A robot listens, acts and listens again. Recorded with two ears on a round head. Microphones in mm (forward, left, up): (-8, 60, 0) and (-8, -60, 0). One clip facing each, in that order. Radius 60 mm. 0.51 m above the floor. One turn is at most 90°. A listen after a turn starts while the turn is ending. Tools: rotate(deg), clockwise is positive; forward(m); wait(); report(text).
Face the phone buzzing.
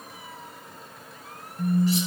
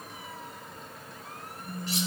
rotate(-55)
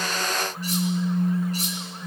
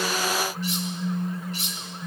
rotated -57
report("Found it: a phone buzzing, straight ahead.")